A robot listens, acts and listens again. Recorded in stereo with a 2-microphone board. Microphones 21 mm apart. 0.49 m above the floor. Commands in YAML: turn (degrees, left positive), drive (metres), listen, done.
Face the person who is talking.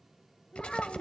turn: 40
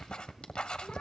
listen: true
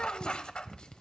listen: true
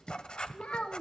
turn: 100
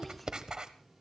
listen: true
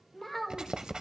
done: "Found it: a child speaking, straight ahead."